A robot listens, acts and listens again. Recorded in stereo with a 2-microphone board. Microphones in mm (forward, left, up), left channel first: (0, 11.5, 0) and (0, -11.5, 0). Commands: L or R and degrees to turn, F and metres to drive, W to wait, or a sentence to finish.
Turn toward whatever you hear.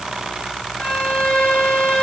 L55
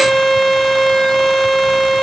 Facing the violin.